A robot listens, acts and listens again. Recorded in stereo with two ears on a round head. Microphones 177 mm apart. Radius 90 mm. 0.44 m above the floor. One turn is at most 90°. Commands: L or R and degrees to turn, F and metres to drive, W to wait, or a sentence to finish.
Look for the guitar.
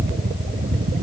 W
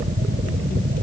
W
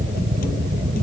I can't make out a guitar to turn to.